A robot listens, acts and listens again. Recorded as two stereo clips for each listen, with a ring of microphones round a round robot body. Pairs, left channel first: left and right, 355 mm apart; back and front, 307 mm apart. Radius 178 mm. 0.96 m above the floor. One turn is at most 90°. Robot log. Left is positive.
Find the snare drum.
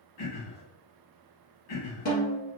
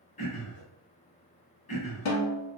note: The snare drum: 155° left.
cmd yaw +90
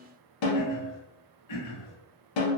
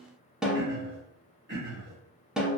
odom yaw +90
note: The snare drum is now 85° left.
cmd yaw +85
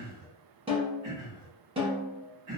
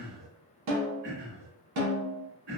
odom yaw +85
note: The snare drum is now 15° right.
cmd yaw -15
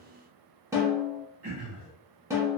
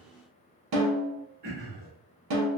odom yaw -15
note: The snare drum is now 10° right.
cmd yaw -10
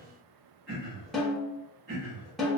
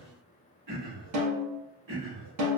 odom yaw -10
end: Facing the snare drum, 1 to 2 m away.